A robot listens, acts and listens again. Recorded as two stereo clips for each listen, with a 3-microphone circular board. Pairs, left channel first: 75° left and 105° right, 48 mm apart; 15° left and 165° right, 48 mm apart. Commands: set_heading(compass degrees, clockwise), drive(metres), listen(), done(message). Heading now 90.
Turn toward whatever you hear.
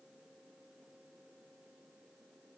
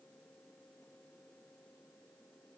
listen()
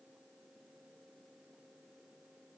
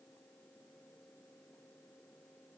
listen()
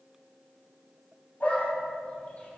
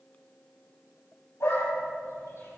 set_heading(70)
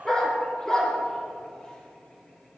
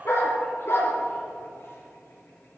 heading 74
done("Facing the dog barking, over 4 m away.")